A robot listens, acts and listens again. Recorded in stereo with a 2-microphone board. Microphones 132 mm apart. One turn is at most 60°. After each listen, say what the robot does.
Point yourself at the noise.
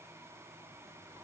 Keep listening.
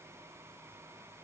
Keep listening.
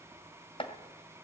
Turn 45° left.
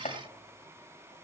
Turn 60° left.
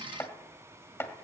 Turn 20° left.
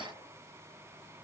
Keep listening.
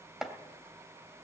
Found it: chopping, straight ahead, 2 to 4 m away.